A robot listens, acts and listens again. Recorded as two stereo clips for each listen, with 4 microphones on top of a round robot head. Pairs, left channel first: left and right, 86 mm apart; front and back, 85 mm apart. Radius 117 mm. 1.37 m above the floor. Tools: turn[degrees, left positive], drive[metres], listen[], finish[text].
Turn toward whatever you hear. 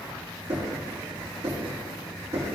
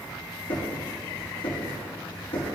Thought: The knocking: 30° right.
Action: turn[-30]
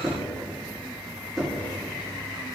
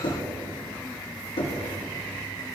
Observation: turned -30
Action: finish[Facing the knocking, 2 to 4 m away.]